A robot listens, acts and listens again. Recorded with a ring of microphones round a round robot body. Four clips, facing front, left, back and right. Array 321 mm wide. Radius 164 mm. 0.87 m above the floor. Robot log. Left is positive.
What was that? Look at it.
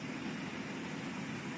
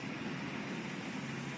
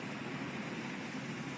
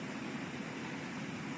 cmd idle
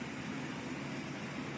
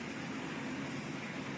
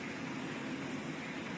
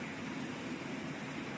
cmd idle
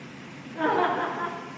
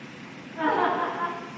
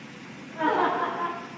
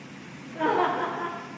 note: The laughter: 55° right.
cmd yaw -55
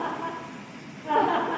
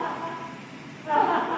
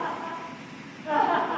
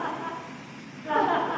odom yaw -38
note: The laughter is now 35° right.
cmd yaw -35
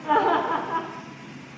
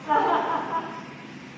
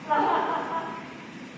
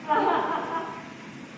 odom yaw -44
end: Facing the laughter, 2 to 4 m away.